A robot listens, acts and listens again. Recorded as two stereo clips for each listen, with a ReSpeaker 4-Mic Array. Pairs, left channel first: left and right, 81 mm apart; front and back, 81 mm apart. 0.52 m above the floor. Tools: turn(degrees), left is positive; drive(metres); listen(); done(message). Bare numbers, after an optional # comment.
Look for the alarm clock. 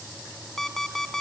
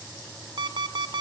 # The alarm clock: 175° left.
turn(175)
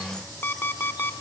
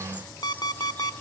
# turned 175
# The alarm clock is now 30° left.
turn(30)
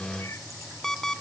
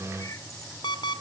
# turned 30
done("Facing the alarm clock, under 1 m away.")